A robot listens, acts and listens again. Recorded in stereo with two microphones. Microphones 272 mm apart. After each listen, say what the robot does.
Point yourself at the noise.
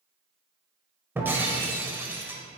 Turn 30° right.
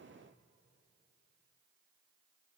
Keep listening.
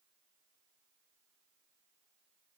I heard breaking glass, but can't make it out now. It was about 20° left or 140° right.